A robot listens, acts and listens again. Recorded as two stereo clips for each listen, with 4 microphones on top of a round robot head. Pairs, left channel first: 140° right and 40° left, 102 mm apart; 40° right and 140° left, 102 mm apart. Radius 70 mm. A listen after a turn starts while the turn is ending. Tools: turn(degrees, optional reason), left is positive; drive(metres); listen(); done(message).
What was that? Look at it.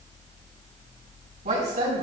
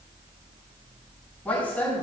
turn(degrees=35, reason="The woman speaking: 35° left.")
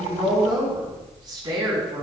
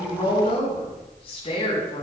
done("Facing the woman speaking.")